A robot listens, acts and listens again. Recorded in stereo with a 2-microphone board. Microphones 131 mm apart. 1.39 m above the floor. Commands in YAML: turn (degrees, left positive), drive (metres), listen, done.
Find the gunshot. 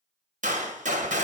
turn: -75
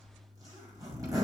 listen: true
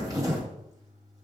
done: "I heard a gunshot, but can't make it out now. It was about straight ahead or 30° right."